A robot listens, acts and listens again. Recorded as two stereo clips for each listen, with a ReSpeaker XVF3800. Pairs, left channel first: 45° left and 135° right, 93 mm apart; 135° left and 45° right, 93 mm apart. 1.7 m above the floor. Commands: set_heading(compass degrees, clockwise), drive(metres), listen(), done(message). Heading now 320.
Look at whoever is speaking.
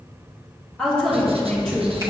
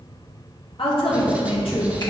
set_heading(195)
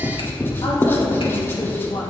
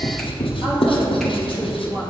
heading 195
done("Found it: a woman speaking, straight ahead.")